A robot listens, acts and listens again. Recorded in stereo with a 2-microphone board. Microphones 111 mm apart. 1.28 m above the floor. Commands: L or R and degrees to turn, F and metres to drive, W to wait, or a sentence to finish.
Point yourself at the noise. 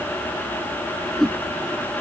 L30
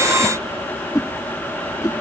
L145
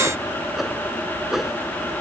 Found it: a whoosh, straight ahead.